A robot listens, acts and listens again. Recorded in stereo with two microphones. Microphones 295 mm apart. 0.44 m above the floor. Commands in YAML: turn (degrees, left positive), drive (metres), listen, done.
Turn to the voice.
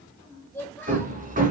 turn: 30
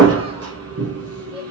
listen: true
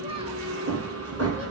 listen: true
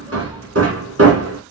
done: "I heard a child speaking, but can't make it out now. It was about 25° right or 145° left."